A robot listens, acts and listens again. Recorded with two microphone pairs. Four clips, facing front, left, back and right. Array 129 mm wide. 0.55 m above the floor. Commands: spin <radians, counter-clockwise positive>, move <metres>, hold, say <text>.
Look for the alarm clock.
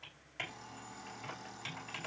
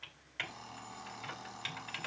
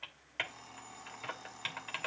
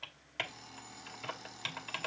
spin 1.66
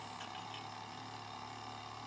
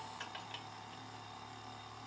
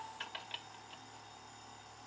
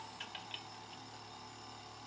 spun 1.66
spin 0.17
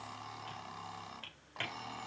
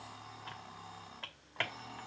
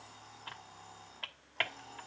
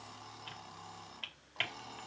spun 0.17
say Found it: an alarm clock, straight ahead, 2 to 4 m away.